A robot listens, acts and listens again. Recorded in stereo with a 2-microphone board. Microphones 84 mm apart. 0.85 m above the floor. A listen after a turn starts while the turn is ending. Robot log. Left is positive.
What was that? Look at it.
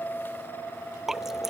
cmd yaw -30
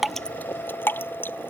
note: So it is at 25° left.
cmd yaw +25
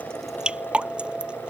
note: The dripping is now 10° right.
cmd yaw -10
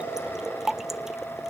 end: Found it: dripping, straight ahead.